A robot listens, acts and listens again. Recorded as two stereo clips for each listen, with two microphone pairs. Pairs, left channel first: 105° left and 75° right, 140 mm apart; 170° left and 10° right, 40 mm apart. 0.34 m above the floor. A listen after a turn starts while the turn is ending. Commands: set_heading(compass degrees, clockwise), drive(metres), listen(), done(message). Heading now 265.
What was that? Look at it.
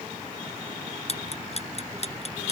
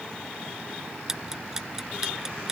set_heading(200)
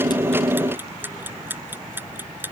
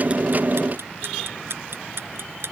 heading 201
done("Found it: ticking, straight ahead.")